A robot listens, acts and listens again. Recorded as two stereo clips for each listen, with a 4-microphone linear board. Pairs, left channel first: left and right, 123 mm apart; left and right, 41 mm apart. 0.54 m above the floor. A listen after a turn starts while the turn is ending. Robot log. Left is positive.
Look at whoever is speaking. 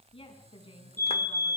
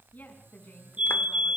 note: The woman speaking: about 45° left or 135° left.
cmd yaw +45
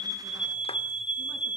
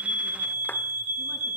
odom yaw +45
cmd idle
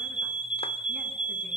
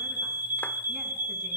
cmd idle
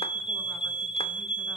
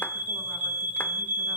end: I heard a woman speaking, but can't make it out now. It was about straight ahead or 90° left.